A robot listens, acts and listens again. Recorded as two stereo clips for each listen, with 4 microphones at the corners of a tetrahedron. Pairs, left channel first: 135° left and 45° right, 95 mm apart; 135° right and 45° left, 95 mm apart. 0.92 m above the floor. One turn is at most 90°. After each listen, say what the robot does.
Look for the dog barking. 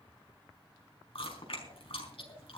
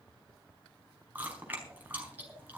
Keep listening.
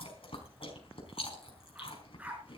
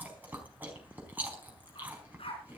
Turn 90° right.
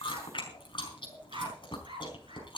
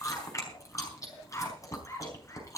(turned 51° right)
Turn 75° right.
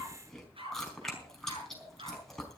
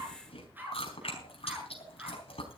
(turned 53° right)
Turn 25° right.
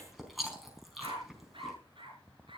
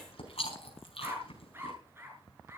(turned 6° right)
Turn 20° right.
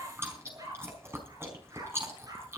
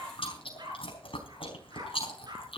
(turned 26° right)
Found it: a dog barking, straight ahead, over 4 m away.